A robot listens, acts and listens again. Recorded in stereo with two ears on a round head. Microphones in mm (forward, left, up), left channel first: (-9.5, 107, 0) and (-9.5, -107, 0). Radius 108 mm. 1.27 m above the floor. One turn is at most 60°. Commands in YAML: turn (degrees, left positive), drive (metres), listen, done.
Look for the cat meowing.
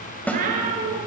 turn: -40
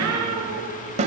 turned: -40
turn: -60
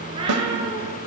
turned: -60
turn: -20
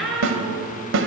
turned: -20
done: "Found it: a cat meowing, straight ahead."